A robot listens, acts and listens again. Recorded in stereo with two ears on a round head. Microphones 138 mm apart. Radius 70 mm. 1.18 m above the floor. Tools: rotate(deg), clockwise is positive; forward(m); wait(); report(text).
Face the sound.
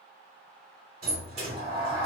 rotate(40)
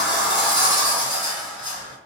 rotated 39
report("Facing the sliding door.")